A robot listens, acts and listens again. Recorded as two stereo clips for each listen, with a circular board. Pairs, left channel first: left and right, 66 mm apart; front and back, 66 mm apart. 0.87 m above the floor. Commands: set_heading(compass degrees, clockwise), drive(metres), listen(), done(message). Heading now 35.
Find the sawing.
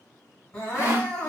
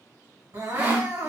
set_heading(165)
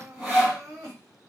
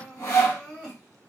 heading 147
set_heading(162)
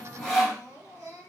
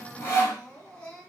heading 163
done("Found it: sawing, straight ahead.")